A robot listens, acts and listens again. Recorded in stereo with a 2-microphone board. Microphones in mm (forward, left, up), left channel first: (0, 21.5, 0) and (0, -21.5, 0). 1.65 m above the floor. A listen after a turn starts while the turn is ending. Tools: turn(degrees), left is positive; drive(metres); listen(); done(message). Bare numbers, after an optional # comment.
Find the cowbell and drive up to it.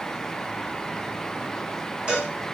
# The cowbell: about 25° right or 155° right.
turn(-25)
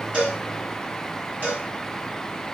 # So it is at 125° right.
turn(-125)
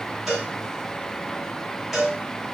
drive(1.0)
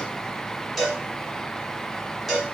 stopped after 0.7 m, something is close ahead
done("I am next to the cowbell.")